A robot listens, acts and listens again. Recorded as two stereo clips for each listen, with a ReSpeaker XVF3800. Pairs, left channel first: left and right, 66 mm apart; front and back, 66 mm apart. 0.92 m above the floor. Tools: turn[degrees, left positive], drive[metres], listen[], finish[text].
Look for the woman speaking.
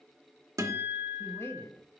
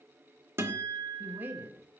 Thought: The woman speaking: 130° left.
Action: turn[130]
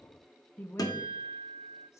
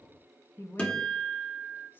Thought: The woman speaking is now 40° left.
Action: turn[40]
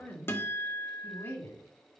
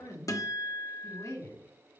Thought: The woman speaking is now 35° left.
Action: turn[35]
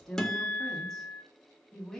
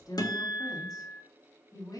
Action: finish[Facing the woman speaking.]